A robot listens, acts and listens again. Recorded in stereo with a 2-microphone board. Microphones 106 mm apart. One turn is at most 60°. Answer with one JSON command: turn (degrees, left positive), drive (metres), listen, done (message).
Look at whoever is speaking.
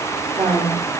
{"turn": -60}
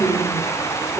{"turn": -25}
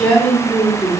{"turn": 15}
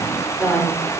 {"done": "Found it: a woman speaking, straight ahead, 2 to 4 m away."}